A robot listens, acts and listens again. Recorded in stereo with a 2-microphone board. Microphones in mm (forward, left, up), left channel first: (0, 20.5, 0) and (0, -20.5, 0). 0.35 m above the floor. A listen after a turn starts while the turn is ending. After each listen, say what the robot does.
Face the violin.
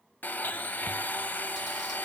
Keep listening.
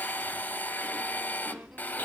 Keep listening.
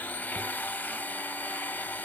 I can't make out a violin, only a blender and chewing.